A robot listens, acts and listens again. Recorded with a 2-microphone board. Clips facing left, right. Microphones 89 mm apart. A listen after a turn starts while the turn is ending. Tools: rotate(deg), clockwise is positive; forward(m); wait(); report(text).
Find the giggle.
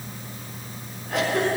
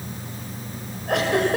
rotate(70)
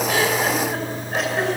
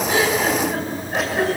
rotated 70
report("Facing the giggle.")